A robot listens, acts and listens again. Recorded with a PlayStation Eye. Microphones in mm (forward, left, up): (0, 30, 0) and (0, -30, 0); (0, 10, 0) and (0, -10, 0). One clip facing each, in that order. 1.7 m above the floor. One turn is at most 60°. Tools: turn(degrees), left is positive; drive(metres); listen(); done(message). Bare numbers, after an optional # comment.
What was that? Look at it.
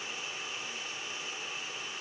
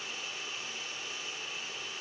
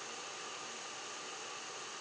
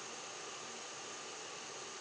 listen()
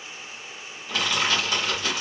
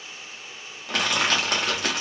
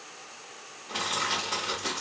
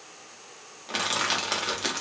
# The crushing: about 60° right or 120° right.
turn(-60)
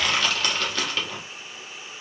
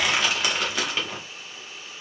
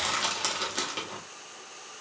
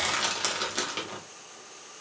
# So it is at 15° right.
turn(-15)
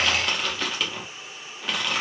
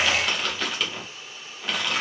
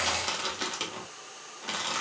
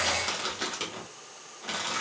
done("Facing the crushing.")